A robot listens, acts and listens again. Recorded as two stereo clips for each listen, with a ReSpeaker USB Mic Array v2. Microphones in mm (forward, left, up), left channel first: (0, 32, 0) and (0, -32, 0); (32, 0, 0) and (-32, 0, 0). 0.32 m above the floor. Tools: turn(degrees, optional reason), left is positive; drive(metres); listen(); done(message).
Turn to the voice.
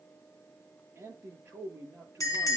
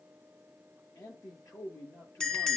turn(degrees=-40, reason="The man speaking: 40° right.")
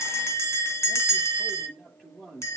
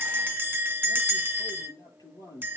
turn(degrees=10, reason="The man speaking is now 10° left.")
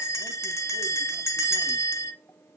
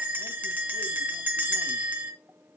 listen()
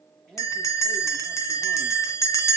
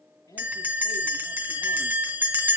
done("Facing the man speaking, over 4 m away.")